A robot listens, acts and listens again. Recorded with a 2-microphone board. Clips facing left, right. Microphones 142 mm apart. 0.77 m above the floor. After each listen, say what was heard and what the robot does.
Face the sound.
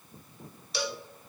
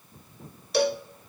The cowbell: about 55° right or 125° right. Turn 55° right.
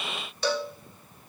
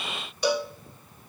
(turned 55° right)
So it is at 15° right. Turn 15° right.
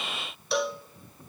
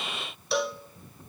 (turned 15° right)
Found it: a cowbell, straight ahead, under 1 m away.